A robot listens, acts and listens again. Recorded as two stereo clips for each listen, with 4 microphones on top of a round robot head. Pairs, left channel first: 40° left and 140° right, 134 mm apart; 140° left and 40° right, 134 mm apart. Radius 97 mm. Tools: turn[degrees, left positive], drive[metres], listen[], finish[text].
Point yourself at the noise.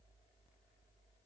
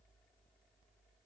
Action: listen[]
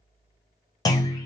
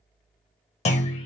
Thought: The clunk: 100° left.
Action: turn[100]
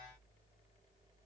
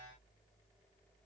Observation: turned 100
Action: finish[I heard a clunk from this way, but can't make it out now.]